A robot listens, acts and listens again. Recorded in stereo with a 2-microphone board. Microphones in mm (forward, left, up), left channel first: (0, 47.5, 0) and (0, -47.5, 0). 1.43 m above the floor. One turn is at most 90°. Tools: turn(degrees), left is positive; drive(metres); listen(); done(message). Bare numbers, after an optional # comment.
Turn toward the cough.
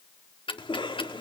# The cough: about 65° left or 115° left.
turn(65)
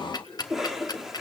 done("Facing the cough, 2 to 4 m away.")